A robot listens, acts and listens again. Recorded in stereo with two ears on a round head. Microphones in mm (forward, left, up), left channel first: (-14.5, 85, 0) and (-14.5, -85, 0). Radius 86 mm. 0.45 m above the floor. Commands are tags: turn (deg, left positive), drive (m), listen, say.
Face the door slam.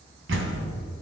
<turn deg="-75"/>
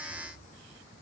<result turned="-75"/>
<listen/>
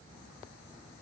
<say>I heard a door slam, but can't make it out now. It was about straight ahead or 30° right.</say>